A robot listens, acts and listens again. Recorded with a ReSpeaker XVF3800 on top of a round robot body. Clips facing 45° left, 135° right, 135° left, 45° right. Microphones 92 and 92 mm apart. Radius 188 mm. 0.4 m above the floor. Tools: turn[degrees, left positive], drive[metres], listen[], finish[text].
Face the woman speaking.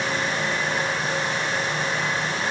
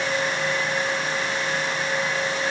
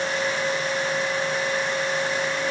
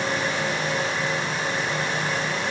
Action: listen[]
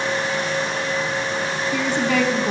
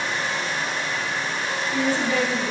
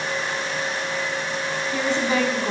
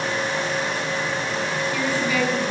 Thought: The woman speaking: 70° left.
Action: turn[70]
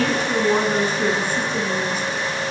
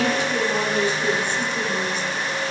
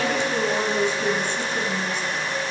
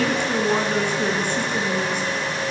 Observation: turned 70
Action: finish[Facing the woman speaking, over 4 m away.]